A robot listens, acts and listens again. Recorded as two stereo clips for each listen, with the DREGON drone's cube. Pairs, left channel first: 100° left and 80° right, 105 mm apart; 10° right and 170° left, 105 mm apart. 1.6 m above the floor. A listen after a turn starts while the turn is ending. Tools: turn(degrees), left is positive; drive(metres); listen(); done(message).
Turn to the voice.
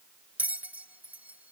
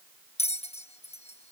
listen()
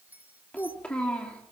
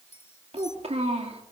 turn(degrees=180)
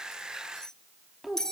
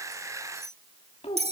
turn(degrees=10)
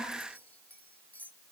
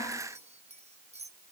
done("Facing the child speaking, 2 to 4 m away.")